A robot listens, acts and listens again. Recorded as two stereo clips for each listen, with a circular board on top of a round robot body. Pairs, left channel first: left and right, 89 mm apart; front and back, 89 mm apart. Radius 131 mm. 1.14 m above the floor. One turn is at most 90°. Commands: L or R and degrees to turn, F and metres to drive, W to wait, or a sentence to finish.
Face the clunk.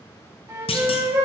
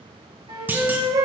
L90
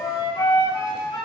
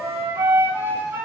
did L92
L15
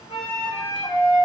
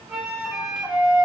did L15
I heard a clunk from this way, but can't make it out now.